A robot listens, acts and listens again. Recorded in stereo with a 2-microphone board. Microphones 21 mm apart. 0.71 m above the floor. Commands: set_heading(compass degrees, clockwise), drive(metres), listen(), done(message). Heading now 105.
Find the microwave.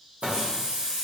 set_heading(170)
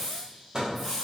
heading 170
set_heading(205)
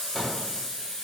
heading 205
listen()
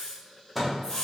done("Found it: a microwave, straight ahead, under 1 m away.")